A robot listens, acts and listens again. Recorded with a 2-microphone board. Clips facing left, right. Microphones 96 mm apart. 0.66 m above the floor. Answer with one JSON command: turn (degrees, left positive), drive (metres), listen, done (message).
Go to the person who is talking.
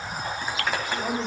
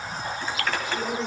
{"turn": 45}
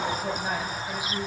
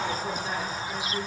{"turn": 90}
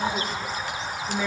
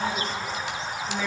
{"turn": 10}
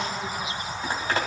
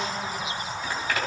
{"listen": true}
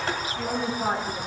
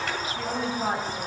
{"drive": 1.0}
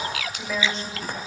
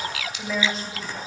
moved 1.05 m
{"drive": 1.0}
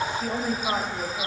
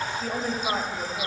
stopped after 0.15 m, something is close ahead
{"done": "Blocked. The woman speaking is further on, straight ahead."}